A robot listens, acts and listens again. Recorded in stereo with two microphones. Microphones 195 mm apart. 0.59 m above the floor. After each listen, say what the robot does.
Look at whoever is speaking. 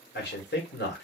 Turn 60° left.
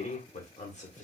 Turn 40° left.
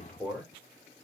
Facing the man speaking, 1 to 2 m away.